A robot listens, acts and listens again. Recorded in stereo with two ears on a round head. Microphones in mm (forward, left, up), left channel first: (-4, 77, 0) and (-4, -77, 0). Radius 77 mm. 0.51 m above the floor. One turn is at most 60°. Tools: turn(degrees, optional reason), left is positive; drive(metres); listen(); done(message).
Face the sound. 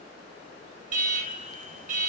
turn(degrees=-45, reason="The alarm: about 45° right or 135° right.")
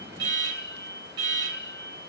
turn(degrees=-60, reason="So it is at 85° right.")
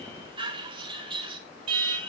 turn(degrees=-35, reason="The alarm is now 35° right.")
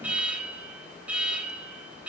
turn(degrees=-10, reason="The alarm is now 10° right.")
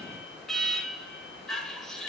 done("Facing the alarm.")